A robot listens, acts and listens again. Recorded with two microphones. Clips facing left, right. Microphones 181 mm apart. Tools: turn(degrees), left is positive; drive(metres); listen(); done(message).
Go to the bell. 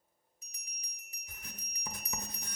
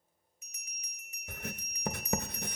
turn(degrees=35)
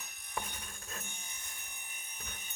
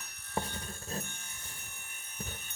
drive(metres=1.0)
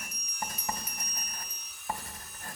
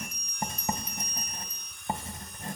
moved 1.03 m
turn(degrees=10)
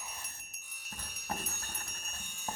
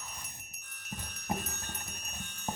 drive(metres=1.0)
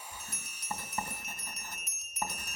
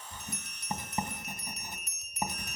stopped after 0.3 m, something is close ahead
done("I am next to the bell.")